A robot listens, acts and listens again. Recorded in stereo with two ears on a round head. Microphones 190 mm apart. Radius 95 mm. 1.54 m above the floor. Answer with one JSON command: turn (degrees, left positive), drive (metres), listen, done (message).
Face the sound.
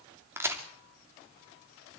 {"turn": -30}
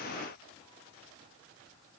{"listen": true}
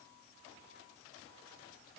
{"done": "I heard a crack, but can't make it out now. It was about 20° left or 140° right."}